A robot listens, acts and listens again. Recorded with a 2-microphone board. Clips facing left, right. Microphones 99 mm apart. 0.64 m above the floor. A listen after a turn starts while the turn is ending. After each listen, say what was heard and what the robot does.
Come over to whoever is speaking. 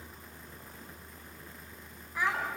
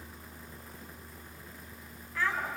The child speaking: about 15° left or 165° left. Turn 15° left.
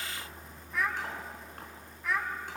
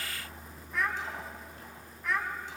Drive 1.0 m forward.
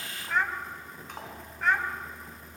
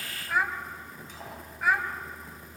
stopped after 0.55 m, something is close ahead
Blocked. The child speaking is further on, straight ahead.